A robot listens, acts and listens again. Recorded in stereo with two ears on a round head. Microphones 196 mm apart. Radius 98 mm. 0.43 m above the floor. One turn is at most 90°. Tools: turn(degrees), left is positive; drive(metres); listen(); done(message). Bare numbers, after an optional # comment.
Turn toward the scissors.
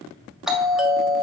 listen()
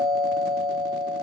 listen()
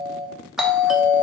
done("I can't make out scissors, only a doorbell.")